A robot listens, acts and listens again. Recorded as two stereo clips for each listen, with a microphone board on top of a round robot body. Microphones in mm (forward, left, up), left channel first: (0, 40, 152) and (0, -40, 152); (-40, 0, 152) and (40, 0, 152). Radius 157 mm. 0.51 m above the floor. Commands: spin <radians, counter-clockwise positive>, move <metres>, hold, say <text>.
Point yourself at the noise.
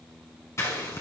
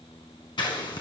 spin 2.62
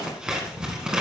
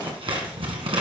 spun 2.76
spin -0.17
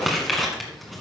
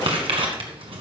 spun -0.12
say Found it: scissors, straight ahead, 1 to 2 m away.